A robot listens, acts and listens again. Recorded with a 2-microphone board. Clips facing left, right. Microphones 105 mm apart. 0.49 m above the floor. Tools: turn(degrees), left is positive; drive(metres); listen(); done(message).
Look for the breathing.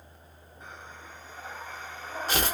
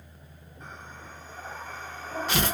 turn(degrees=30)
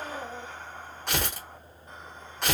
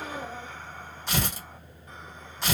turn(degrees=150)
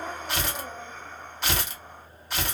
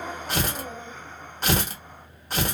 done("Found it: breathing, straight ahead.")